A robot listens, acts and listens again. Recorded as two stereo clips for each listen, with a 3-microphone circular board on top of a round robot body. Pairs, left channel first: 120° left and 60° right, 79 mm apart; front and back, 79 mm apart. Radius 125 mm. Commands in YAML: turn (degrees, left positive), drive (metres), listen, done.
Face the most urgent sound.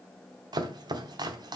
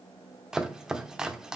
listen: true
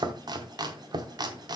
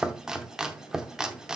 listen: true
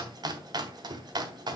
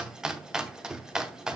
done: "I can't make out anything urgent, only chopping."